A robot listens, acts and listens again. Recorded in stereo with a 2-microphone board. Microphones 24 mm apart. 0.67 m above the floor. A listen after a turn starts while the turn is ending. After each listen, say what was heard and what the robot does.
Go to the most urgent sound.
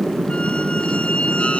Keep listening.
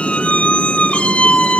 Keep listening.
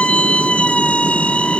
I can't make out anything urgent to turn to.